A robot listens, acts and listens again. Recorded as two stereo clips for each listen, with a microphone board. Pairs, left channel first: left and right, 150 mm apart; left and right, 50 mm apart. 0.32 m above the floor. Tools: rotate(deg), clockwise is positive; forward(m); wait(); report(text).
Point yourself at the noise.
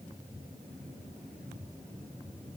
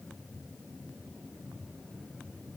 wait()
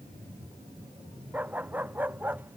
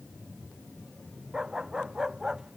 rotate(30)
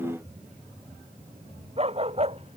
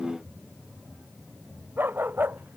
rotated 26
rotate(135)
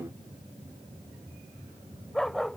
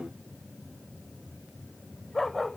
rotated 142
report("Found it: a dog barking, straight ahead.")